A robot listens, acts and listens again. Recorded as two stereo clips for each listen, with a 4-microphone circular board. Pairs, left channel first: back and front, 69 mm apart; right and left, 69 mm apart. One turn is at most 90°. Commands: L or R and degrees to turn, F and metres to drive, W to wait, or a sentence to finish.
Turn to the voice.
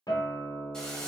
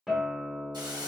W
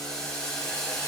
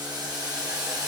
W
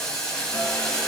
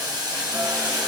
I can't make out anyone speaking, only a guitar and boiling.